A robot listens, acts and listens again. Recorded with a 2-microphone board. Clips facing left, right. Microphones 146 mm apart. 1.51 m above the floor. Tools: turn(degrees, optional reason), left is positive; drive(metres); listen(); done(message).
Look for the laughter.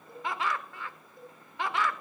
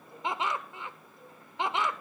turn(degrees=-20, reason="The laughter: about 20° right or 160° right.")
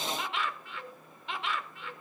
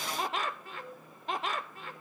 turn(degrees=-140, reason="So it is at 140° right.")
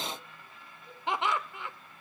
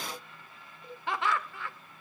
turn(degrees=20, reason="The laughter is now 20° left.")
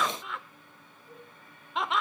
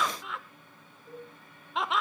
done("Found it: laughter, straight ahead, 1 to 2 m away.")